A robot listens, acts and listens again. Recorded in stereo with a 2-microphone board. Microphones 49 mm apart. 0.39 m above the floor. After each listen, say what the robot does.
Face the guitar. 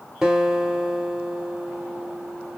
Turn 30° right.
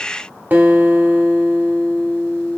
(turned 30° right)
Turn 135° right.
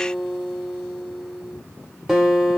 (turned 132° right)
Found it: a guitar, straight ahead.